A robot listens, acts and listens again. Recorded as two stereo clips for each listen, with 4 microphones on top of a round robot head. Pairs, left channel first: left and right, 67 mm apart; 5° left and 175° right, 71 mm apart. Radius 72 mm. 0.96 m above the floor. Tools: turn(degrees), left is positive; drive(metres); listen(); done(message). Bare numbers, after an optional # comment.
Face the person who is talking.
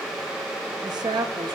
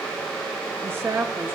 # The woman speaking: 115° right.
turn(-115)
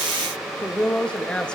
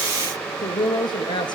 # The woman speaking is now 15° left.
turn(15)
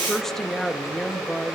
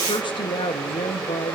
done("Found it: a woman speaking, straight ahead.")